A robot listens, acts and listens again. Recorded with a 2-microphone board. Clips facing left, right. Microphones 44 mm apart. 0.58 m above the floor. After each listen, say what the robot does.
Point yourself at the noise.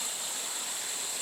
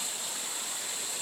Keep listening.
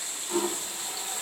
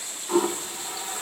Turn 40° right.
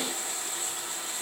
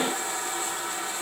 Turn 100° right.
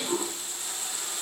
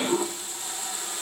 Turn 15° right.
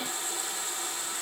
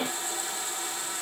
Facing the toilet flushing.